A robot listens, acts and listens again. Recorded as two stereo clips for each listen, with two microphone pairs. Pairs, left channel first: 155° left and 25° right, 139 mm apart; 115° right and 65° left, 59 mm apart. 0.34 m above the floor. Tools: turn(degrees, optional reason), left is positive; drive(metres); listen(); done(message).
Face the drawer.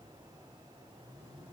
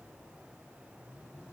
listen()
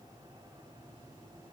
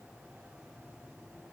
listen()
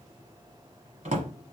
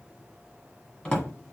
turn(degrees=-45, reason="The drawer: 45° right.")
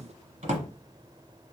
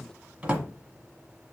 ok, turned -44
done("Found it: a drawer, straight ahead.")